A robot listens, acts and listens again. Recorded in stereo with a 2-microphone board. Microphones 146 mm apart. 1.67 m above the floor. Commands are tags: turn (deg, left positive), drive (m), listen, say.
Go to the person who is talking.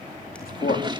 <turn deg="90"/>
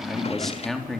<drive m="1.0"/>
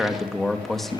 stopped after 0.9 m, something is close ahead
<say>Something is in my way. I am facing the man speaking but have not reached it.</say>